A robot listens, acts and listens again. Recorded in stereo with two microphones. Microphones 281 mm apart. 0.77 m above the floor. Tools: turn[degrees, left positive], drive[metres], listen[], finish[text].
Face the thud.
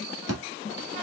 Thought: The thud: about 65° right or 115° right.
Action: turn[-65]
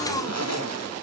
Action: listen[]
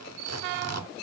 Action: finish[I heard a thud, but can't make it out now. It was about straight ahead or 50° right.]